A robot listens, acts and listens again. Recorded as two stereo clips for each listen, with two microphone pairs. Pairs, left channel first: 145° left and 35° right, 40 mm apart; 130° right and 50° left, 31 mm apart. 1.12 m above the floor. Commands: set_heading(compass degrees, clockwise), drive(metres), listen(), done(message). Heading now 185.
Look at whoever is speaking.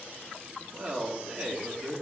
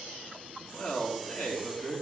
set_heading(280)
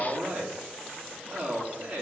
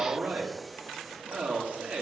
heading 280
set_heading(255)
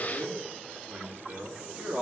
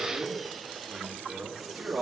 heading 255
set_heading(240)
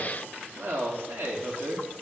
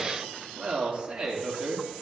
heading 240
done("Facing the man speaking.")